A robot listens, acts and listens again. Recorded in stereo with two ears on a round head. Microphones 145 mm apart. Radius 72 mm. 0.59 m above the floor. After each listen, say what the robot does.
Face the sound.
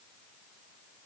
Keep listening.
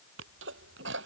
Turn 90° right.
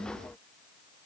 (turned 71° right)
Turn 20° right.
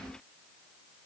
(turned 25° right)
I heard a sneeze from this way, but can't make it out now.